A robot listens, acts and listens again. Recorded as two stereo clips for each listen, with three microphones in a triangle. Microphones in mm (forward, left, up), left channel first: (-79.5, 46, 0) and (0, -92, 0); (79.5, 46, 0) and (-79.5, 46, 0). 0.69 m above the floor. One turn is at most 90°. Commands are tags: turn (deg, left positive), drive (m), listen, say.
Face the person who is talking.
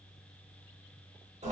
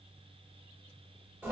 <listen/>
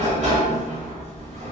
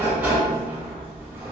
<listen/>
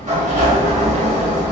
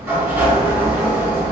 <say>I can't make out anyone speaking, only a sliding door.</say>